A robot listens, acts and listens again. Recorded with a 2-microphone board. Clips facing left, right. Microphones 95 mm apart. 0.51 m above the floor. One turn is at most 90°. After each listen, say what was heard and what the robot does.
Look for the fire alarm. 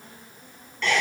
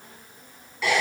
Keep listening.
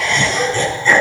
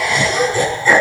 Keep listening.
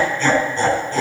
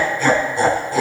I can't make out a fire alarm, only laughter.